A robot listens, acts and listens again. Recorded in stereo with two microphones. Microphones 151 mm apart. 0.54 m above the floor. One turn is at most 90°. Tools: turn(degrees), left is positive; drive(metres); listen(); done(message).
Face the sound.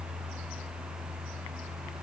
listen()
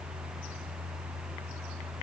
listen()
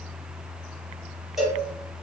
turn(degrees=30)
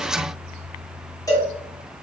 turn(degrees=90)
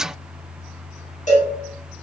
turn(degrees=90)
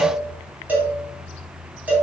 turn(degrees=-10)
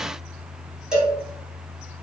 done("Found it: a cowbell, straight ahead.")